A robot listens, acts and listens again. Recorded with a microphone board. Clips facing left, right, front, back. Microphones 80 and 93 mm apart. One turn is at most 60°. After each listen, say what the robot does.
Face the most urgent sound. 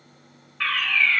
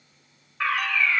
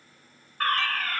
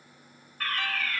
Turn 20° right.
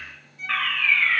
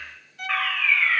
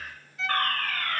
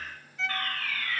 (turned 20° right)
Found it: a fire alarm, straight ahead, 2 to 4 m away.